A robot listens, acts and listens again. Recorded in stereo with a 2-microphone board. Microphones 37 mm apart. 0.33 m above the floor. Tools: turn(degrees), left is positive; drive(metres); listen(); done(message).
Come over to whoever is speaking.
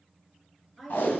turn(degrees=30)
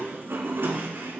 listen()
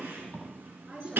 turn(degrees=-20)
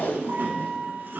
listen()
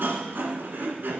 listen()
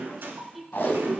drive(metres=1.0)
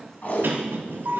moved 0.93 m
listen()
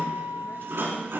listen()
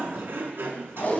done("Facing where the woman speaking came from. I can't hear it now. I did not reach it.")